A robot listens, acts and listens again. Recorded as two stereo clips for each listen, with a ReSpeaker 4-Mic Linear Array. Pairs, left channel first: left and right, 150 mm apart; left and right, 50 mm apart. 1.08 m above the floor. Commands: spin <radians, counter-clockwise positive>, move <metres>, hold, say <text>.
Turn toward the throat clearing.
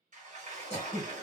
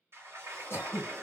spin 0.87
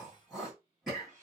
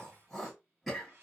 say Facing the throat clearing.